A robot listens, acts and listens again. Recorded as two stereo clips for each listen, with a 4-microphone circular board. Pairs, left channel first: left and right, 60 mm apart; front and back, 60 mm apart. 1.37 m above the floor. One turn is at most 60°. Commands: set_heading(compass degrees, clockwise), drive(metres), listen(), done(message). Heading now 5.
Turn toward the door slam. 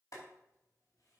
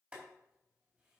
listen()
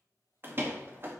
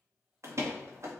set_heading(65)
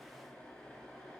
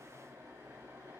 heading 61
set_heading(121)
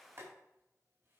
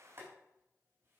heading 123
set_heading(148)
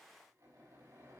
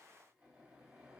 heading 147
done("I heard a door slam from this way, but can't make it out now.")